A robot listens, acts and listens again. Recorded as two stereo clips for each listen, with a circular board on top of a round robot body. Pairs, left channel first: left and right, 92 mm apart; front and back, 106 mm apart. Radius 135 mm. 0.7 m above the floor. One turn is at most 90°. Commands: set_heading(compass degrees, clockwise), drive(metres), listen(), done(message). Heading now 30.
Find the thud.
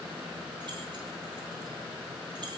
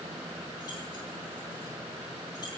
listen()
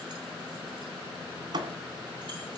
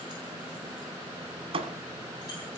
set_heading(120)
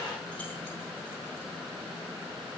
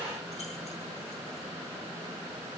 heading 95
set_heading(170)
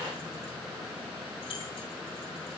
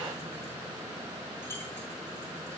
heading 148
set_heading(168)
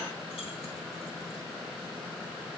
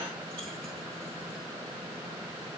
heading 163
done("I heard a thud from this way, but can't make it out now.")